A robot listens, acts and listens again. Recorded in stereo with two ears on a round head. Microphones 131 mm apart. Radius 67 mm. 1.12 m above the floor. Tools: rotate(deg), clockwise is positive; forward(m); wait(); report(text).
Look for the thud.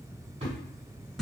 rotate(45)
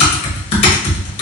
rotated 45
wait()
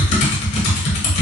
report("I heard a thud, but can't make it out now. It was about straight ahead or 90° right.")